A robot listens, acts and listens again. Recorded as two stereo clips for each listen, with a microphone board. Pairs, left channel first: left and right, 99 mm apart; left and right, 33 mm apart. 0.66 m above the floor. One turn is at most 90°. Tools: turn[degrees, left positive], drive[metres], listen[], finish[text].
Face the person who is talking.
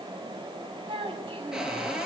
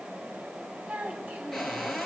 Thought: The child speaking: about 65° right or 115° right.
Action: turn[-65]
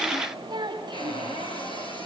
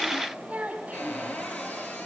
Thought: So it is at 50° right.
Action: turn[-50]
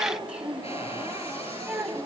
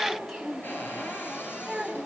Thought: The child speaking is now 10° right.
Action: turn[-10]
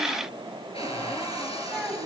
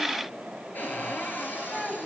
Action: finish[Found it: a child speaking, straight ahead.]